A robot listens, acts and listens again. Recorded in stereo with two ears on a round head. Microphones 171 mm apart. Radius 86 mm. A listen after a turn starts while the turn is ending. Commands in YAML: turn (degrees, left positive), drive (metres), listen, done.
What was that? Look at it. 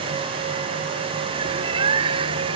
turn: -30
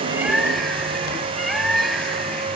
done: "Found it: a bird, straight ahead."